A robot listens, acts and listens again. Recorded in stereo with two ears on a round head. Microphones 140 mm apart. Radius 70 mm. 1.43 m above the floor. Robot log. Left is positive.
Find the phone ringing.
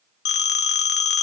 cmd yaw +90
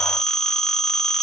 end: Facing the phone ringing.